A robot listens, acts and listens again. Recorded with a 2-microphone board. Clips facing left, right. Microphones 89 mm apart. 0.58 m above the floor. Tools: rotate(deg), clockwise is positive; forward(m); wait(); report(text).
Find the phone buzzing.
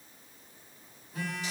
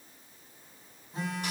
rotate(25)
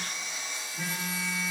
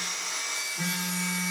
report("Facing the phone buzzing.")